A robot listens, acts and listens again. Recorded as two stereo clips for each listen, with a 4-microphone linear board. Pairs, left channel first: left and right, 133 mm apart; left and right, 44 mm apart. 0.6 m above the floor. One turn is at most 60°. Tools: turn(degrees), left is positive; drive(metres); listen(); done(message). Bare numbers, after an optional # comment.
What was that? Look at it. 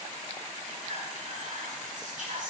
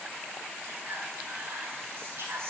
# The whispering: about 70° right or 110° right.
turn(-60)
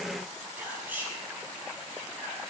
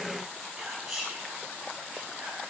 # So it is at 15° right.
turn(-15)
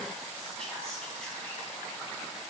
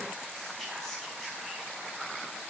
listen()
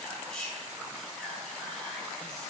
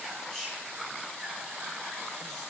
done("Found it: whispering, straight ahead.")